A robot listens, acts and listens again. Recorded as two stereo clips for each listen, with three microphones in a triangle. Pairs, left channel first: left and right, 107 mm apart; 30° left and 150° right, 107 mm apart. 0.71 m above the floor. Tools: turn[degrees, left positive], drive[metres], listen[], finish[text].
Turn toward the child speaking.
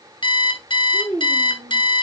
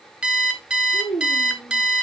Thought: The child speaking: 45° right.
Action: turn[-45]
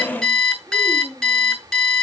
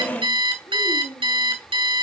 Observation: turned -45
Action: finish[Facing the child speaking.]